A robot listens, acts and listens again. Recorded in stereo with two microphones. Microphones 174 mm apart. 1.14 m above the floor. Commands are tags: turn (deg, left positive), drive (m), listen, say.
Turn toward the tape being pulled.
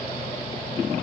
<listen/>
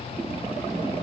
<listen/>
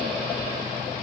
<say>I can't make out tape being pulled.</say>